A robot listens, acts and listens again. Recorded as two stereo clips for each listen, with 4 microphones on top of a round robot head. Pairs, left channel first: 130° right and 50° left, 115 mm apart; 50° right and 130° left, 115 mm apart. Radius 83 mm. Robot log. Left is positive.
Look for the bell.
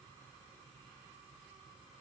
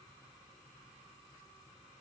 cmd idle
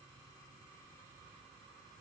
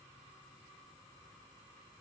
cmd idle
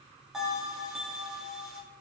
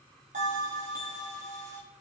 note: The bell: 135° left.
cmd yaw +135
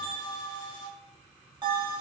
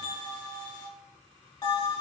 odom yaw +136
end: Facing the bell.